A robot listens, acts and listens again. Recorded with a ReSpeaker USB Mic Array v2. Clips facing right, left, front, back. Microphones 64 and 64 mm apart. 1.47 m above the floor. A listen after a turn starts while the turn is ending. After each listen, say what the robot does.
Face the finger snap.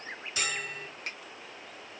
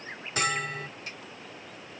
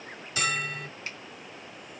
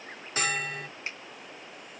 Turn 110° right.
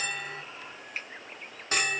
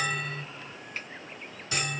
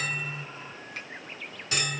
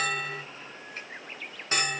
Keep listening.
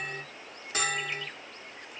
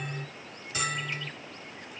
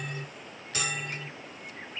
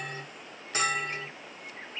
Keep listening.
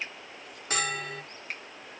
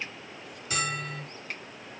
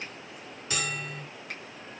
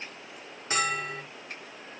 Facing where the finger snap came from. I can't hear it now.